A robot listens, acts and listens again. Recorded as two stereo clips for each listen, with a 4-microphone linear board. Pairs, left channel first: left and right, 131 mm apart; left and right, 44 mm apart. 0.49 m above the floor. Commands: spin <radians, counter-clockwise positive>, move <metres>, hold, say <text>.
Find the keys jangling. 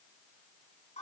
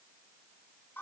hold
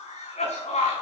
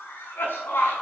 hold
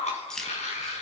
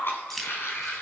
spin 0.52
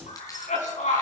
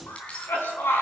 hold
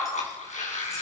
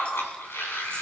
hold
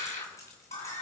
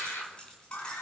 say I heard keys jangling, but can't make it out now. It was about 25° right or 145° left.